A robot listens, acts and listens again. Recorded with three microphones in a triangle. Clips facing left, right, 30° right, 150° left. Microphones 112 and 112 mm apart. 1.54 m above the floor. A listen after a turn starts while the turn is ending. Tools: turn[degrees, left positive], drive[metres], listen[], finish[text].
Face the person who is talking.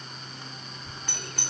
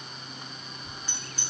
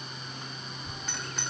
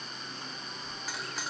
Thought: The child speaking: 15° left.
Action: turn[15]
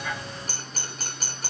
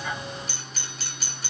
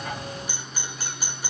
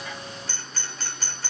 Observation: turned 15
Action: listen[]
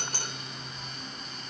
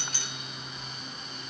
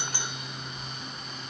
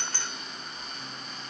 Action: finish[Facing the child speaking.]